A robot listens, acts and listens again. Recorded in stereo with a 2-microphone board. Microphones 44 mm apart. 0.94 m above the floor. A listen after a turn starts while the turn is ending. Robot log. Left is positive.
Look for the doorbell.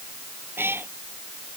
cmd idle
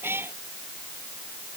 cmd idle
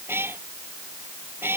end: I can't make out a doorbell to turn to.